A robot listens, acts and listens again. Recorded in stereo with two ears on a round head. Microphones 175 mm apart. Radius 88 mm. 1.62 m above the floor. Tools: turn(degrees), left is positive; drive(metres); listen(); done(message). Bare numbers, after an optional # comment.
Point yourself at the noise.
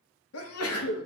turn(90)
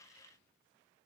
done("I heard a sneeze from this way, but can't make it out now.")